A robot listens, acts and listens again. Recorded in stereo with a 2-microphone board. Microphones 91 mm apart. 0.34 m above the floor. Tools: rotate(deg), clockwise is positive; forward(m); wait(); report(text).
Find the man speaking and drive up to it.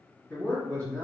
rotate(-30)
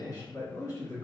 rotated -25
rotate(-140)
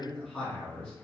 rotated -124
rotate(-15)
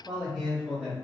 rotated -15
forward(1.0)
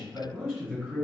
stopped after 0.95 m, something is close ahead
report("Arrived at the man speaking, straight ahead.")